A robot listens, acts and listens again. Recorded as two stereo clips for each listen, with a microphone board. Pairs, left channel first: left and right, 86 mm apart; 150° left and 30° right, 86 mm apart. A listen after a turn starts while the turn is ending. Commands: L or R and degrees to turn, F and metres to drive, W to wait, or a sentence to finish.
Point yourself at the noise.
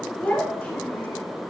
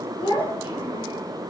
L165
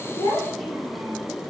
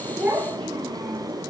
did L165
W
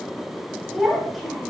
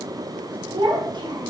Found it: a child speaking, straight ahead.